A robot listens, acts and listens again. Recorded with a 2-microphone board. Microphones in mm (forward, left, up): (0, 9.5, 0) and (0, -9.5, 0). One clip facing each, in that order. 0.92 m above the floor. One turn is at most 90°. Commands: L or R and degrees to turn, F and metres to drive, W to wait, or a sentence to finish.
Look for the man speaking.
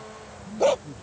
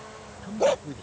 R55
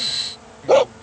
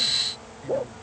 W
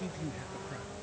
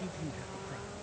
Found it: a man speaking, straight ahead.